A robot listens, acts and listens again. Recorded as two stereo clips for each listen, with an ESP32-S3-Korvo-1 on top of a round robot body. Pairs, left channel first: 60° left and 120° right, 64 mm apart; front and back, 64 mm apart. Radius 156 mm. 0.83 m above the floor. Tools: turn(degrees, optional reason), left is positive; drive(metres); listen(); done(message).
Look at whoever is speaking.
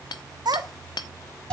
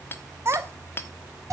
turn(degrees=-115, reason="The child speaking: 115° right.")
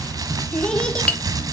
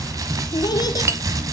turn(degrees=-15, reason="The child speaking is now 15° right.")
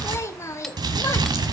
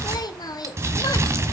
turn(degrees=15, reason="The child speaking is now 15° left.")
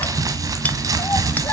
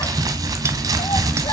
listen()
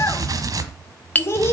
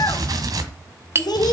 turn(degrees=10, reason="The child speaking is now 10° left.")
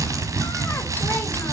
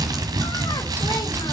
listen()
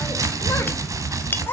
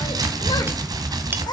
done("Facing the child speaking, 2 to 4 m away.")